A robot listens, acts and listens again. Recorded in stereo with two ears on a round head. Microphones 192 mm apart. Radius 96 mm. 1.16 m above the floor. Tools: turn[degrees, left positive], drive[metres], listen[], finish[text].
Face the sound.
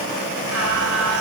Thought: The singing: about 70° right or 110° right.
Action: turn[-70]
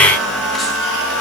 Action: finish[Facing the singing.]